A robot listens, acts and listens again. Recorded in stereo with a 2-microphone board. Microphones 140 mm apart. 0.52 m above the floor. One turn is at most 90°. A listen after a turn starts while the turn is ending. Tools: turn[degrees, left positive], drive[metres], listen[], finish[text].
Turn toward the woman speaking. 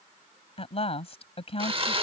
Thought: The woman speaking: about 45° left or 135° left.
Action: turn[45]
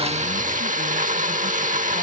Action: listen[]
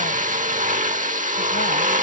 Action: listen[]
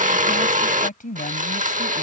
Thought: So it is at 85° left.
Action: turn[85]
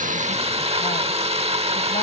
Action: listen[]
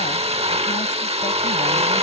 Action: listen[]
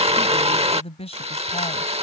Thought: The woman speaking is now 50° left.
Action: turn[50]
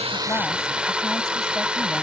Action: listen[]
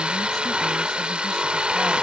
Action: listen[]
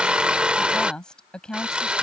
Action: finish[Found it: a woman speaking, straight ahead.]